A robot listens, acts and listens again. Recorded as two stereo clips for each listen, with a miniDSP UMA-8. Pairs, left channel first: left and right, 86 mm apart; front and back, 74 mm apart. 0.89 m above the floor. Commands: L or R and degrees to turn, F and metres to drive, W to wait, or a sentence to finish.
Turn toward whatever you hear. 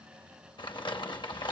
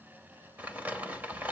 L110
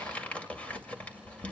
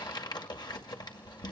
L15
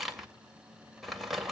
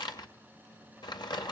Found it: crumpling, straight ahead, 2 to 4 m away.